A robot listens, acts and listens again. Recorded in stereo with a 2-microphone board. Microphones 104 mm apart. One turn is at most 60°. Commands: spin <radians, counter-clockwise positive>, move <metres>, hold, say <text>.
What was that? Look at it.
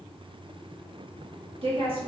spin -1.05
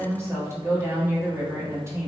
spin -0.52
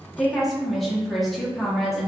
say Found it: a woman speaking, straight ahead, under 1 m away.